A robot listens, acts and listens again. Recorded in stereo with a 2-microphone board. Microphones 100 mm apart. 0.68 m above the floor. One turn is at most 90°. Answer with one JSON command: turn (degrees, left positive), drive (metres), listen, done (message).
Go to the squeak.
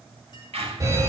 {"turn": -90}
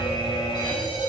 {"listen": true}
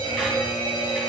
{"listen": true}
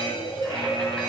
{"done": "Facing where the squeak came from. I can't hear it now. I did not reach it."}